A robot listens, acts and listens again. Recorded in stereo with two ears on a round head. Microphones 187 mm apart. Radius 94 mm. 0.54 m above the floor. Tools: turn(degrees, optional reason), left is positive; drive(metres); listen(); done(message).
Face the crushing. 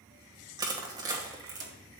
turn(degrees=-20, reason="The crushing: about 20° right or 160° right.")
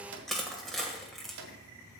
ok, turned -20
done("Found it: crushing, straight ahead, 1 to 2 m away.")